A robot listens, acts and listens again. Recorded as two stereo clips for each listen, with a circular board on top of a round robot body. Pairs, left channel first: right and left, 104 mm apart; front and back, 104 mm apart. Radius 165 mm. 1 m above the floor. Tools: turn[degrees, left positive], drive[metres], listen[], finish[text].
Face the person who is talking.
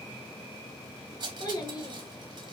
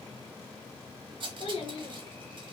Thought: The child speaking: 40° right.
Action: turn[-40]
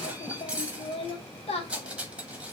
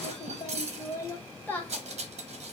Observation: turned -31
Thought: The child speaking is now 75° right.
Action: turn[-75]
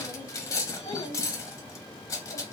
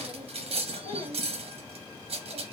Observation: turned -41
Thought: Nothing new. It was at 35° right.
Action: turn[-35]
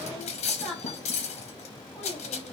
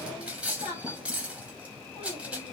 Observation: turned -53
Thought: The child speaking is now 10° right.
Action: turn[-10]
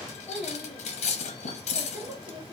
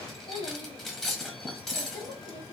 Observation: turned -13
Action: finish[Found it: a child speaking, straight ahead, 2 to 4 m away.]